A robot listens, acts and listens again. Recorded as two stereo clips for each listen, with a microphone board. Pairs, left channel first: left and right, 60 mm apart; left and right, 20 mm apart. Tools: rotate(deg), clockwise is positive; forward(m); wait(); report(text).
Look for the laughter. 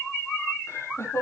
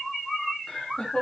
rotate(-55)
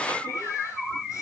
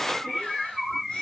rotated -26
wait()
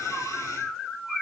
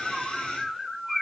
wait()
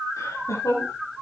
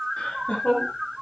rotate(-70)
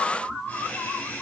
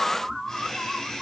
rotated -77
rotate(-35)
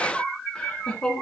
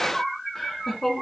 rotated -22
rotate(-20)
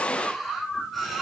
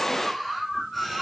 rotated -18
wait()
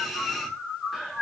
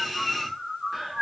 report("Found it: laughter, straight ahead, over 4 m away.")